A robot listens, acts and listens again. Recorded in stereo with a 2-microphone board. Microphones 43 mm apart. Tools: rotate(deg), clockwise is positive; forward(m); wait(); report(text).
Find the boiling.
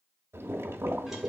rotate(90)
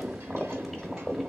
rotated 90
report("Facing the boiling, under 1 m away.")